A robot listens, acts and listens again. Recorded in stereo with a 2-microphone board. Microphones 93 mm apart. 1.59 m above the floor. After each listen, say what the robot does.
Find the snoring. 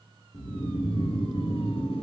Turn 90° left.
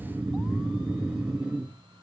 Turn 10° right.
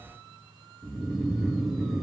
Facing the snoring, 1 to 2 m away.